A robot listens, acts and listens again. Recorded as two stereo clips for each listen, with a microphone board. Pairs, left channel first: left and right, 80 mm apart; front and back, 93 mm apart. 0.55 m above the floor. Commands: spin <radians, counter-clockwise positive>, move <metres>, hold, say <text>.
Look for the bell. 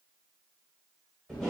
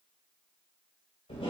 hold
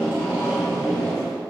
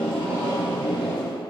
hold
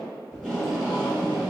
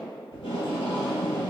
say I can't make out a bell, only tape being pulled.